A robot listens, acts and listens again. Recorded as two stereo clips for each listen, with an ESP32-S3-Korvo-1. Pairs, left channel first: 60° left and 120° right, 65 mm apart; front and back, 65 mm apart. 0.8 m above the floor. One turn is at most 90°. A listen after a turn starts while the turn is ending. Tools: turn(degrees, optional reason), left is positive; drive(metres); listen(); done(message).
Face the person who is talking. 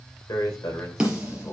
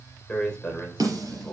turn(degrees=75, reason="The man speaking: 75° left.")
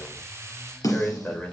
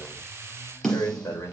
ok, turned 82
done("Found it: a man speaking, straight ahead, 2 to 4 m away.")